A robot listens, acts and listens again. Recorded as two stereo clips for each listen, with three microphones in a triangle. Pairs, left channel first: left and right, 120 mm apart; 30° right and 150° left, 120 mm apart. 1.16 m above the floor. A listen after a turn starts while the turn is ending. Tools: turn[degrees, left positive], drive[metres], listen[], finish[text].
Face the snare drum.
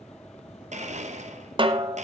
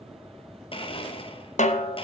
Thought: The snare drum: 40° right.
Action: turn[-40]
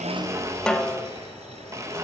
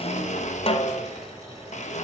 Action: finish[Found it: a snare drum, straight ahead, under 1 m away.]